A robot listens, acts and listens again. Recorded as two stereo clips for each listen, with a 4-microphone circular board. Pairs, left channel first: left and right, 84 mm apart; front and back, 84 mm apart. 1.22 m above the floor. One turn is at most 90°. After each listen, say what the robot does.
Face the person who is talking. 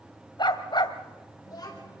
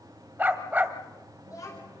Turn 50° left.
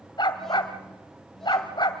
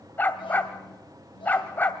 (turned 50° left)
Keep listening.
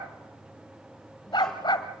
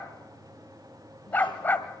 Keep listening.
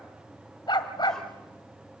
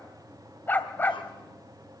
Facing where the child speaking came from. I can't hear it now.